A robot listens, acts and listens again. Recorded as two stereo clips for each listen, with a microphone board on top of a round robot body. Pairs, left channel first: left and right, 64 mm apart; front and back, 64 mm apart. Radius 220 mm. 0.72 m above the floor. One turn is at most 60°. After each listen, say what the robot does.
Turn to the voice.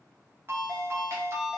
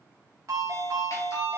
Keep listening.
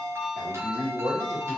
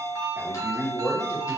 Turn 60° right.
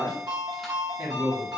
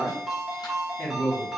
Turn 55° right.
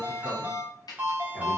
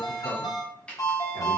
Keep listening.
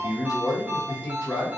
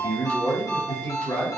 Turn 15° left.
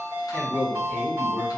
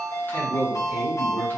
Facing the man speaking.